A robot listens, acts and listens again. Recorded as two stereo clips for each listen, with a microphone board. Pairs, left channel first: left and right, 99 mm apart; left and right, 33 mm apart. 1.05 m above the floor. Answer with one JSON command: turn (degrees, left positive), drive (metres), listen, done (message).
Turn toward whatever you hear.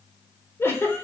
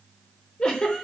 {"turn": 25}
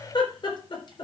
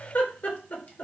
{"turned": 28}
{"turn": 125}
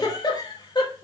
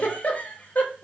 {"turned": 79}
{"turn": 45}
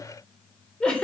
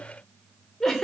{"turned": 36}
{"turn": 10}
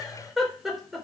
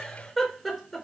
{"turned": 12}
{"done": "Found it: a giggle, straight ahead, 2 to 4 m away."}